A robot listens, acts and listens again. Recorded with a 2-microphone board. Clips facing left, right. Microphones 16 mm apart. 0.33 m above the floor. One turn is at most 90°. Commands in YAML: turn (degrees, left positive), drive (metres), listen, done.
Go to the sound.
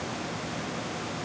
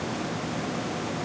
listen: true
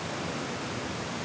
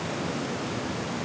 listen: true
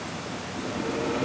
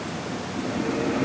turn: -25
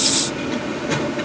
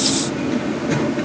drive: 1.0
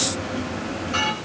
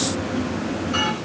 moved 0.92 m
drive: 1.0
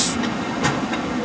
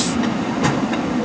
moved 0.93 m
turn: -10
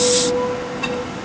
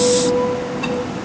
drive: 1.0
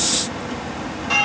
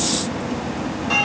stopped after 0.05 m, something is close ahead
done: "Arrived at the bell, straight ahead."